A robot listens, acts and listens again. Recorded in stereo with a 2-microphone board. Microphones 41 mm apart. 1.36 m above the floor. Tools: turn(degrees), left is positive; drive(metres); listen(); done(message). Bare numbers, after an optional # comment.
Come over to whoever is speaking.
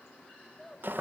turn(30)
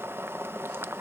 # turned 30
listen()
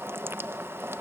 listen()
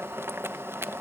done("I heard a child speaking, but can't make it out now. It was about 25° right or 145° left. I did not reach it.")